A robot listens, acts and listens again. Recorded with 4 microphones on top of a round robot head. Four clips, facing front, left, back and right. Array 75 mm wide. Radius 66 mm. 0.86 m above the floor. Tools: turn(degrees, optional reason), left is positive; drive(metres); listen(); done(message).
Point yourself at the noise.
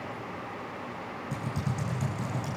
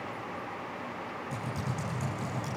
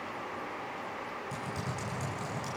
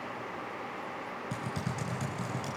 turn(degrees=-85, reason="The typing on a keyboard: 85° right.")
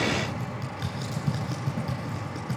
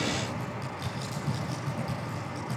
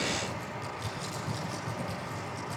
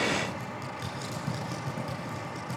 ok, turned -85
turn(degrees=-25, reason="The typing on a keyboard is now 25° right.")
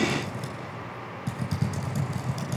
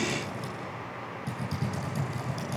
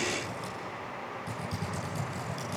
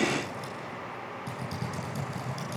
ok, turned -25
done("Found it: typing on a keyboard, straight ahead, over 4 m away.")